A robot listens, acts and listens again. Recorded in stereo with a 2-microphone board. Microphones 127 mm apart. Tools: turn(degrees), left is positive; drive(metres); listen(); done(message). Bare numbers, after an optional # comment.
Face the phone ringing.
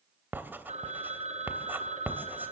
# The phone ringing: about 70° right or 110° right.
turn(-70)
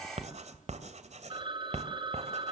# So it is at 40° right.
turn(-40)
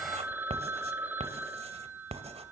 # The phone ringing is now 15° right.
turn(-15)
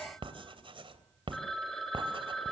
done("Found it: a phone ringing, straight ahead.")